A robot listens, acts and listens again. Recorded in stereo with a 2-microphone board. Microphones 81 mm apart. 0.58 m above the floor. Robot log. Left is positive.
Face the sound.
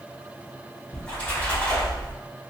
cmd yaw +30
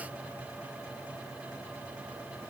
cmd idle
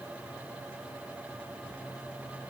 end: I heard a splash, but can't make it out now. It was about 15° right or 135° left.